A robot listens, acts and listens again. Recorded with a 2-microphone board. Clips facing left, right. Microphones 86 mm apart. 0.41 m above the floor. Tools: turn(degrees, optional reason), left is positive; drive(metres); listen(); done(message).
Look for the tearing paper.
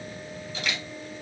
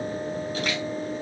listen()
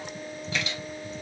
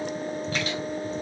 listen()
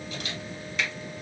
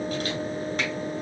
done("I can't make out tearing paper to turn to.")